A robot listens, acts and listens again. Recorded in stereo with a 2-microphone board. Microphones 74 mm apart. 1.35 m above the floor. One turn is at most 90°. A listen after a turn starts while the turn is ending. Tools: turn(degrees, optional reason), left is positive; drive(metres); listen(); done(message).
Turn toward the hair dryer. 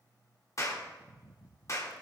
listen()
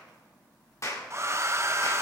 turn(degrees=-40, reason="The hair dryer: about 40° right or 140° right.")
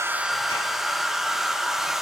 done("Found it: a hair dryer, straight ahead, under 1 m away.")